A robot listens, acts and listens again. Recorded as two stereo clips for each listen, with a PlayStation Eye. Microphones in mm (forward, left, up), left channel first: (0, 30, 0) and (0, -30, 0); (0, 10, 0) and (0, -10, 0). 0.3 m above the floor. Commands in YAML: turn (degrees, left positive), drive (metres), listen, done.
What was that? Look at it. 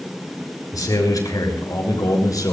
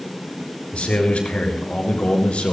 turn: 75
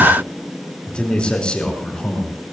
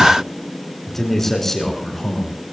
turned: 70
turn: 15
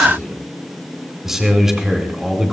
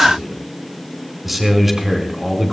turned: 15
done: "Facing the man speaking."